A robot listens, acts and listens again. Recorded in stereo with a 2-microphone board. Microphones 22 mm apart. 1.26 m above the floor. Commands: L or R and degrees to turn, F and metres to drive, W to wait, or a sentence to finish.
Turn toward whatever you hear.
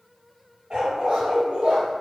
R55
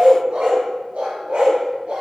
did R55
R60
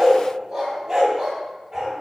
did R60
R10
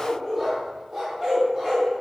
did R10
Found it: a dog barking, straight ahead.